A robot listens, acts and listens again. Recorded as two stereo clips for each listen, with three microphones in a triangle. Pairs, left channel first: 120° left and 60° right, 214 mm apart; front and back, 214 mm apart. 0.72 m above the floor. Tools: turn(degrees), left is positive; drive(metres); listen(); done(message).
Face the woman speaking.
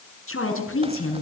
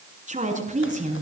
turn(degrees=125)
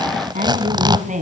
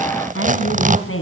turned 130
done("Found it: a woman speaking, straight ahead, over 4 m away.")